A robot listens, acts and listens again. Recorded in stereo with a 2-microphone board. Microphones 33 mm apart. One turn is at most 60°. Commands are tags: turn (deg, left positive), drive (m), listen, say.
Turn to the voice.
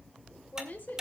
<turn deg="60"/>
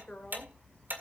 <listen/>
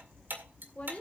<turn deg="45"/>
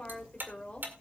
<turn deg="35"/>
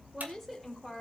<say>Facing the woman speaking, 2 to 4 m away.</say>